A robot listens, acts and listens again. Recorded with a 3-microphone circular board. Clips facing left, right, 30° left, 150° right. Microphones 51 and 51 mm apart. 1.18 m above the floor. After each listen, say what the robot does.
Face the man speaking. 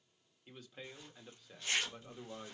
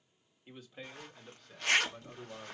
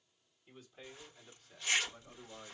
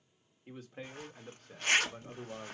Turn 170° left.
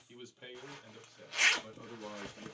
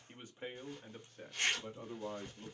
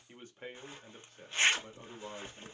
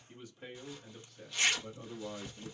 Turn 40° right.
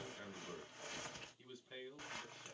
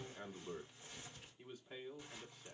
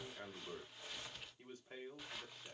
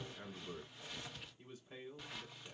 Turn 15° right.
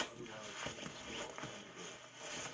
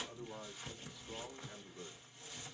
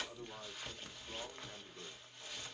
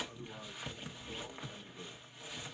Keep listening.
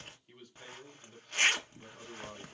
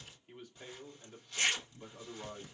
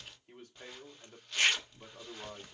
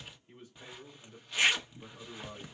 Found it: a man speaking, straight ahead, 2 to 4 m away.